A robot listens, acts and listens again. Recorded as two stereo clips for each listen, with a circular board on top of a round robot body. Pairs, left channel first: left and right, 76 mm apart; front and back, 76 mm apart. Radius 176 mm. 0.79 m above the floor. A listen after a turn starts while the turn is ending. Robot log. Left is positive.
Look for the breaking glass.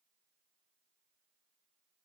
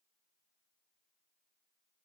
cmd idle
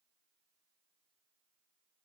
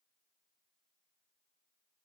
cmd idle
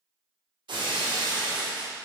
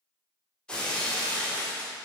note: The breaking glass: 80° right.
cmd yaw -80
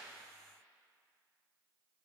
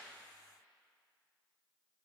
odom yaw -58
note: Nothing new. It was at 20° right.
cmd yaw -20
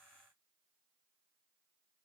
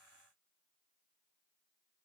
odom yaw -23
end: Facing where the breaking glass came from. I can't hear it now.